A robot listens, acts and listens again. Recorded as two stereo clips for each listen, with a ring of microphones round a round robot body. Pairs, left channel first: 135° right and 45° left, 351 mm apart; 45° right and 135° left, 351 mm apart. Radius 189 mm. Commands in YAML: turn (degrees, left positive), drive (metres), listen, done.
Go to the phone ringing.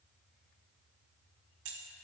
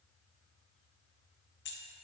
listen: true
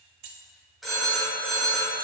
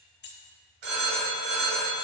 turn: 135
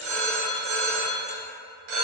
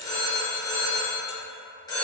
turn: 35
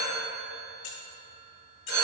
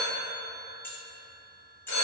drive: 1.0
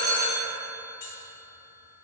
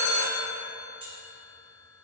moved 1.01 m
drive: 1.0
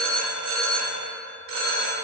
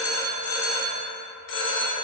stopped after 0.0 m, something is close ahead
turn: -10
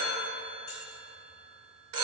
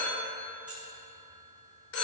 done: "I am next to the phone ringing."